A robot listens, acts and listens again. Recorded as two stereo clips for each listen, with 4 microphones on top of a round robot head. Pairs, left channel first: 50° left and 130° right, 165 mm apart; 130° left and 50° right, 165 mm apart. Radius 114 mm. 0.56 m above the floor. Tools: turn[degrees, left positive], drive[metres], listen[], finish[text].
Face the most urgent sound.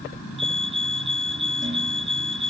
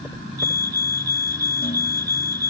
Thought: The fire alarm: 75° right.
Action: turn[-75]
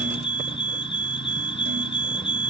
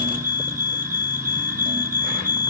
Thought: The fire alarm is now 10° right.
Action: turn[-10]
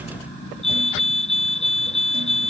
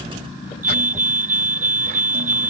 Action: finish[Found it: a fire alarm, straight ahead.]